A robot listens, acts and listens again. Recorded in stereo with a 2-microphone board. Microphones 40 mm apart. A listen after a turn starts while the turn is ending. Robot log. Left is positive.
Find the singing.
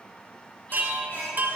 note: The singing: about 50° left or 130° left.
cmd yaw +50
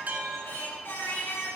note: So it is at 80° left.
cmd yaw +80
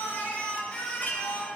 note: The singing is now 30° left.
cmd yaw +30
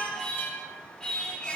note: The singing is now 15° left.
cmd yaw +15
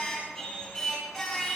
end: Facing the singing, over 4 m away.